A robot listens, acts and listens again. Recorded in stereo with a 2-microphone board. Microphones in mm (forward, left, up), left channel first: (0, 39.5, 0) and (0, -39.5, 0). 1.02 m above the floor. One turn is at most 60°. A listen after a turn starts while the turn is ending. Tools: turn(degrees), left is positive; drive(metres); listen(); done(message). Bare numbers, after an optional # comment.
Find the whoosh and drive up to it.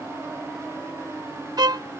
listen()
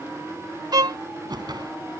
# The whoosh: about 65° right or 115° right.
turn(-60)
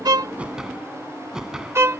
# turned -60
# So it is at 10° right.
turn(-10)
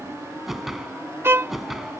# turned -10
drive(1.0)
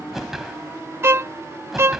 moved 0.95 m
drive(1.0)
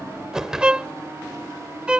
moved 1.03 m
# The whoosh is now 10° right.
turn(-10)
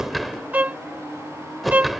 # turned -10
drive(1.0)
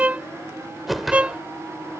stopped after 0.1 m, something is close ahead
done("I am next to the whoosh.")